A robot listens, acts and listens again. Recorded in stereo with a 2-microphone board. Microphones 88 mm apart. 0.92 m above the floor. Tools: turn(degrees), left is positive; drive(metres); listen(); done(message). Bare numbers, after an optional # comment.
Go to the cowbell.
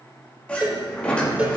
# The cowbell: about 15° right or 165° right.
turn(-15)
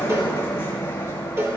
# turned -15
# So it is at 150° right.
turn(-150)
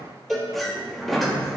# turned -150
drive(1.0)
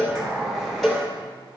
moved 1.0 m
drive(1.0)
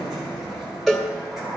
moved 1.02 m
drive(1.0)
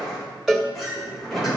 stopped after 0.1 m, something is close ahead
done("I am next to the cowbell.")